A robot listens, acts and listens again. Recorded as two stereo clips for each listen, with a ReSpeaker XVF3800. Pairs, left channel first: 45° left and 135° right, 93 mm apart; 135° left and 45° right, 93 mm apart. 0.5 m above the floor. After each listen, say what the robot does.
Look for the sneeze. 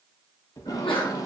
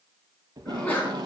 Turn 60° left.
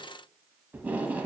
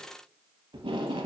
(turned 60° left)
Facing where the sneeze came from. I can't hear it now.